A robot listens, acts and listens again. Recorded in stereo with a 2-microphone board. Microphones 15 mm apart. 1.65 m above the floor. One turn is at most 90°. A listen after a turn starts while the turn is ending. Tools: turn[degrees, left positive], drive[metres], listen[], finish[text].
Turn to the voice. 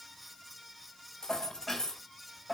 Action: listen[]
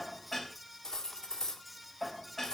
Action: listen[]
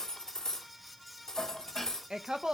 Thought: The woman speaking: about 70° right or 110° right.
Action: turn[-70]
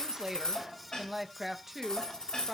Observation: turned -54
Thought: So it is at 20° right.
Action: turn[-20]
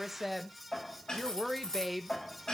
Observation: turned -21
Action: finish[Facing the woman speaking.]